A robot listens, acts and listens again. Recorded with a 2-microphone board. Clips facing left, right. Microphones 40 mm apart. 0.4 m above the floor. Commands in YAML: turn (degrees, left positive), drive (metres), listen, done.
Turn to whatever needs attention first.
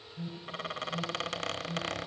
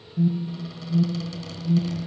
turn: -30
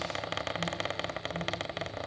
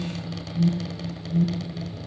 turn: 15
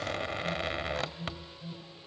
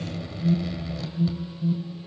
done: "Facing the alarm."